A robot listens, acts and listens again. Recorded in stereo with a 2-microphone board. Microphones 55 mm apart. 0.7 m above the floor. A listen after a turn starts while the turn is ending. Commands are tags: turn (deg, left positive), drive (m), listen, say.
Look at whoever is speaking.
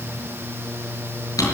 <listen/>
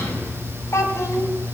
<turn deg="65"/>
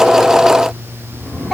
<say>Found it: a child speaking, straight ahead, over 4 m away.</say>